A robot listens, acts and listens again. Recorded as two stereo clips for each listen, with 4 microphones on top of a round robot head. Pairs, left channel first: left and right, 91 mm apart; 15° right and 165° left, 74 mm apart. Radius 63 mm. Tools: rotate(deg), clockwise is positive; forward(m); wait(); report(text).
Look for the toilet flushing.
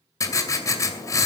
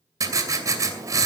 wait()
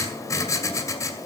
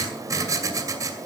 wait()
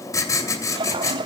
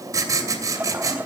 rotate(125)
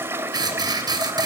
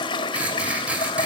rotate(20)
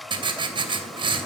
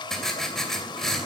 report("Facing the toilet flushing.")